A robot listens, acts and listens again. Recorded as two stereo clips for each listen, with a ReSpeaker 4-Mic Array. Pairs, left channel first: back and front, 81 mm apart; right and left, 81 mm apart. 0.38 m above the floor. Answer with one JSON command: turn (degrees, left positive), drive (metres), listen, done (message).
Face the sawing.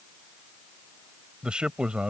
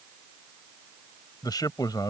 {"listen": true}
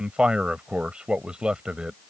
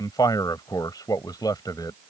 {"listen": true}
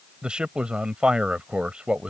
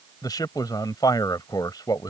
{"done": "I can't make out sawing, only a man speaking."}